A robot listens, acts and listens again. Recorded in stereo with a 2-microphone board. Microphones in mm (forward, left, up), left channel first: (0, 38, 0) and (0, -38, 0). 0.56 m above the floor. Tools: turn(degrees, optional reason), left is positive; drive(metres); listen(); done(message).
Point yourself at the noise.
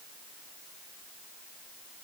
listen()
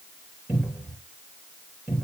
turn(degrees=-30)
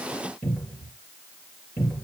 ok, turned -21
done("Found it: a cupboard door, straight ahead.")